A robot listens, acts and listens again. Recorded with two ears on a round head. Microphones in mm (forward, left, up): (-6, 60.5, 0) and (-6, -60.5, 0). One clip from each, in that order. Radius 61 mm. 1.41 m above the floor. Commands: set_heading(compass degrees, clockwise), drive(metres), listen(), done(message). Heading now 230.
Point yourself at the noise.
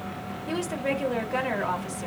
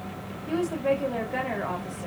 set_heading(140)
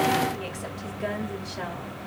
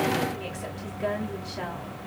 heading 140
set_heading(130)
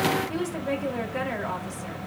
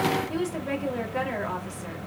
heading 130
done("Found it: a woman speaking, straight ahead.")